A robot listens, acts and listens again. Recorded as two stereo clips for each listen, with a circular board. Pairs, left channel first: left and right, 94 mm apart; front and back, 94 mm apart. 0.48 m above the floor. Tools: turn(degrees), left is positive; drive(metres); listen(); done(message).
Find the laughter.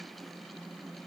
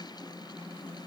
listen()
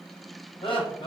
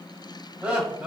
turn(degrees=95)
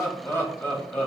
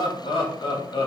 turn(degrees=20)
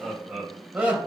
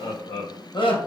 turn(degrees=-15)
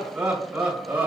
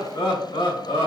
turn(degrees=-20)
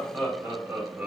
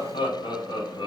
turn(degrees=-10)
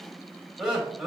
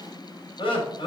done("Facing the laughter.")